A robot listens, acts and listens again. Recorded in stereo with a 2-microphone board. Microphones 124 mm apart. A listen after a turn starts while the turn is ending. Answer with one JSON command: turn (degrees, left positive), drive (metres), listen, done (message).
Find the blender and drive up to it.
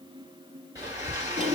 {"turn": -25}
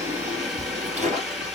{"drive": 1.0}
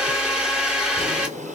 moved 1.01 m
{"turn": -10}
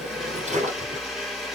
{"drive": 1.0}
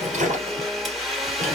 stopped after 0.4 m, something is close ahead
{"done": "I am next to the blender."}